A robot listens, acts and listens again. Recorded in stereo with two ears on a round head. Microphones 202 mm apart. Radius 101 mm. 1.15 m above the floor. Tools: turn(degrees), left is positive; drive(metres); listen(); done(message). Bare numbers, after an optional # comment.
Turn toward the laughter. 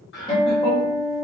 # The laughter: about 50° left or 130° left.
turn(50)
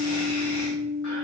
listen()
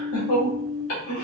# So it is at 75° left.
turn(75)
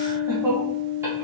# The laughter is now 15° right.
turn(-15)
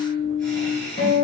done("Found it: laughter, straight ahead, 1 to 2 m away.")